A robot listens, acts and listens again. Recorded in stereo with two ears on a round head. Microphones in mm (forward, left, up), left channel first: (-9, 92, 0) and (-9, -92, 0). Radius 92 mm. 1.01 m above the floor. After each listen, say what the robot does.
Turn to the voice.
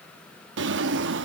Keep listening.
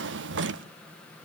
Keep listening.
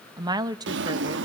Turn 20° right.
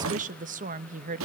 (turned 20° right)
Turn 135° right.
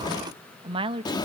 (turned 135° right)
Turn 25° right.
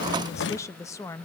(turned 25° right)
Turn 15° left.
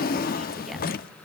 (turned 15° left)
Keep listening.
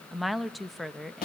Facing the woman speaking, under 1 m away.